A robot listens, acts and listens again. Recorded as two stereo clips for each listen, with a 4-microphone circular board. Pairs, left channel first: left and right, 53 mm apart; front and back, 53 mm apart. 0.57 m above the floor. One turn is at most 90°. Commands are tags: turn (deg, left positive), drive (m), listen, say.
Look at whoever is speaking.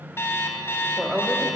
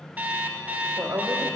<turn deg="90"/>
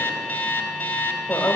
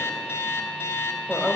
<turn deg="90"/>
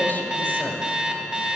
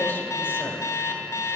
<turn deg="40"/>
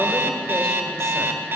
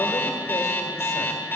<listen/>
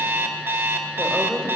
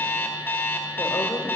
<turn deg="10"/>
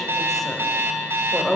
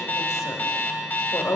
<say>Found it: a woman speaking, straight ahead, 1 to 2 m away.</say>